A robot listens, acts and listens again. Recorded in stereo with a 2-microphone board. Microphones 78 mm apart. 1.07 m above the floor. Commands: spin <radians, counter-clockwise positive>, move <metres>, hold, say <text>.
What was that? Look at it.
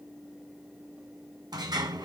spin -1.05
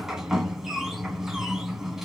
say Facing the sliding door, 2 to 4 m away.